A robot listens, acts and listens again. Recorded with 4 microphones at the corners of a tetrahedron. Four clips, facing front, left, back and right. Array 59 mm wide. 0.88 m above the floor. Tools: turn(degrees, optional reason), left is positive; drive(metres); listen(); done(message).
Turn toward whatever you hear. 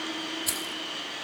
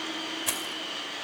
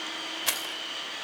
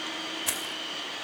turn(degrees=180, reason="The keys jangling: straight behind.")
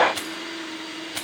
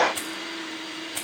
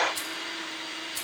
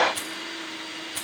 turn(degrees=20, reason="The keys jangling is now 20° left.")
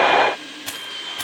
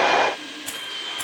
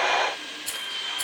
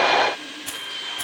done("Facing the keys jangling.")